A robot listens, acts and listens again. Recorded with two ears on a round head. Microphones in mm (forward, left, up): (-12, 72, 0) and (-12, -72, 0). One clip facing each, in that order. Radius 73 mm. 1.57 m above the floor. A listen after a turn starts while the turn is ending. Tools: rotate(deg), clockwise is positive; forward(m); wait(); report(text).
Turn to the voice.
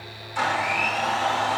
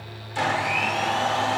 wait()
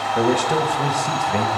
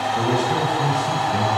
rotate(-35)
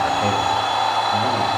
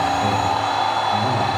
wait()
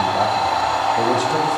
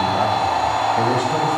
wait()
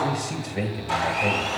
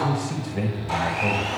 report("Facing the man speaking, 1 to 2 m away.")